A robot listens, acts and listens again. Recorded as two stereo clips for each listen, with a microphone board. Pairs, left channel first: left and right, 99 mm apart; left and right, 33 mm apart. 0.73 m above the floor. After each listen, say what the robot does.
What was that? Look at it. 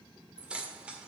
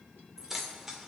Turn 30° right.
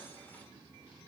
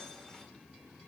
Keep listening.
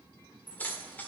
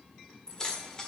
Turn 20° left.
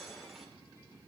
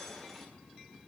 Keep listening.
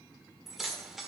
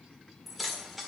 Facing the keys jangling.